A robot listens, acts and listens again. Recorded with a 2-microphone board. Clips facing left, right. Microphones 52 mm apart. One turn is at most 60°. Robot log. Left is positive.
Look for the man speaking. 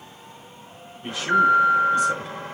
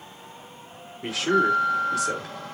cmd yaw -60
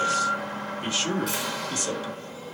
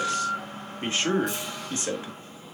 note: So it is at 25° right.
cmd yaw -25
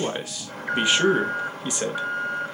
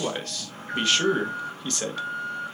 note: The man speaking is now 15° left.
cmd yaw +15
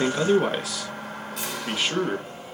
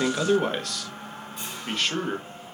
end: Found it: a man speaking, straight ahead, 1 to 2 m away.